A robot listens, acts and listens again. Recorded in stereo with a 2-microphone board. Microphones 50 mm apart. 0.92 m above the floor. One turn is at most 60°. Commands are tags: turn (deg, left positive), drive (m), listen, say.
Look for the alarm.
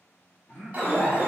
<turn deg="-30"/>
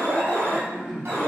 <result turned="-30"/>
<turn deg="-60"/>
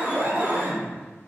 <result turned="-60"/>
<turn deg="-60"/>
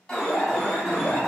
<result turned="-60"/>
<say>Facing the alarm, 1 to 2 m away.</say>